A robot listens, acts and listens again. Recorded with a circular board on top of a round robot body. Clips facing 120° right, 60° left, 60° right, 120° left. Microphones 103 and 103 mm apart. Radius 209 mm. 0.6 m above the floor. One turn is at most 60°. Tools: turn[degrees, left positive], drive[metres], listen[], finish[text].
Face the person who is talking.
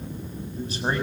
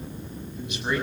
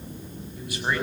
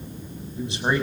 Thought: The man speaking: 175° right.
Action: turn[-60]
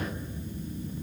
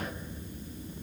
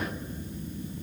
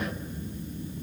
Thought: Nothing new. It was at 115° right.
Action: turn[-60]
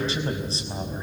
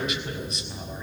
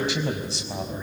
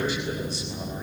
Thought: The man speaking is now 60° right.
Action: turn[-60]
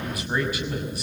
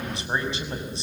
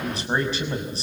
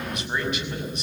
Action: finish[Facing the man speaking, over 4 m away.]